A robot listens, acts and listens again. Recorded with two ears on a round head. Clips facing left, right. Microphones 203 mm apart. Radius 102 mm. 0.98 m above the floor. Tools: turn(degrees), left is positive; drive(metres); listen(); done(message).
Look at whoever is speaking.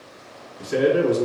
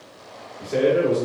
turn(degrees=65)
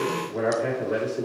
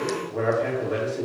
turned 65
done("Found it: a man speaking, straight ahead.")